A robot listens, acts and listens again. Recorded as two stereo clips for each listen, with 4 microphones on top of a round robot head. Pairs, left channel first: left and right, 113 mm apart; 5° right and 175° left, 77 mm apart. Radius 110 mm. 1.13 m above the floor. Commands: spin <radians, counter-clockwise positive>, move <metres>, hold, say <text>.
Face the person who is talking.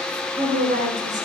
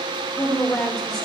spin -1.40
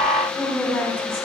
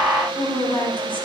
spin 0.17
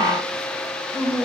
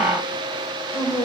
say Facing the woman speaking.